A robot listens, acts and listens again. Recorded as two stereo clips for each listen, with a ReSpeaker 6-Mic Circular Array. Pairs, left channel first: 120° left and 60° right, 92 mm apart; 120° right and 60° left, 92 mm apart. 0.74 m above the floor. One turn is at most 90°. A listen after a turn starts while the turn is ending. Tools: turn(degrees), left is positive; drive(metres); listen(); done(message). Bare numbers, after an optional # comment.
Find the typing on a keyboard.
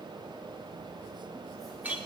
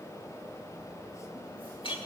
listen()
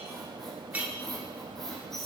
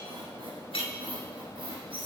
listen()
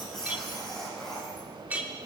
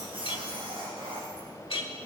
done("I can't make out typing on a keyboard to turn to.")